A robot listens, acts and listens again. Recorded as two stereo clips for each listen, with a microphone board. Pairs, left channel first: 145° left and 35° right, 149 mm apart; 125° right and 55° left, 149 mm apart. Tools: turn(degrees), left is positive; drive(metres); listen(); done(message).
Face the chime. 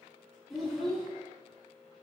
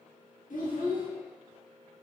listen()
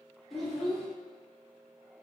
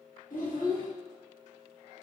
listen()
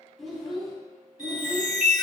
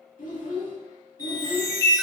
turn(degrees=-60)
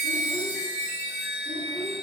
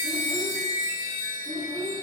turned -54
done("Facing the chime.")